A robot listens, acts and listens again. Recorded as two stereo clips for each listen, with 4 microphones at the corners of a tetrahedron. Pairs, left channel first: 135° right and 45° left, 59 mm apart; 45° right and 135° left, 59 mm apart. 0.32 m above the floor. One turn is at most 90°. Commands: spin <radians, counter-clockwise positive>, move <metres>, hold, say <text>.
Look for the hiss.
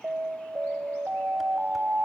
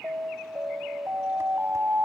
hold
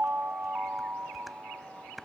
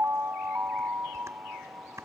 hold
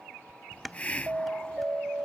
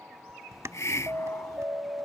spin -1.22
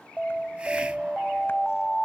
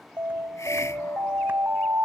hold
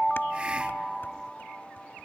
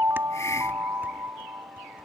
spin -0.44
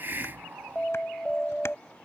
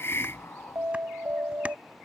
say Found it: a hiss, straight ahead.